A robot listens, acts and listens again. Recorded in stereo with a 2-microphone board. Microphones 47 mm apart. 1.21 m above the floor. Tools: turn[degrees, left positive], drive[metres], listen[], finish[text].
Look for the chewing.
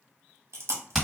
Thought: The chewing: about 70° right or 110° right.
Action: turn[-70]
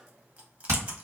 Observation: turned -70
Action: listen[]
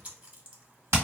Thought: So it is at 35° right.
Action: turn[-35]
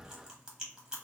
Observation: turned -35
Thought: The chewing is now 15° right.
Action: turn[-15]
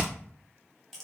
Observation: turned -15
Action: listen[]
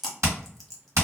Action: finish[Found it: chewing, straight ahead, 1 to 2 m away.]